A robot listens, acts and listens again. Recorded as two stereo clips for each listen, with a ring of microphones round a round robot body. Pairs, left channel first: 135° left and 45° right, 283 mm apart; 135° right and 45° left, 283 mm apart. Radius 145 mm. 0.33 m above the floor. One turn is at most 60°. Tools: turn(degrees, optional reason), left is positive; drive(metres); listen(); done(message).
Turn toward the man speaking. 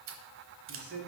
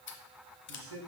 done("Found it: a man speaking, straight ahead.")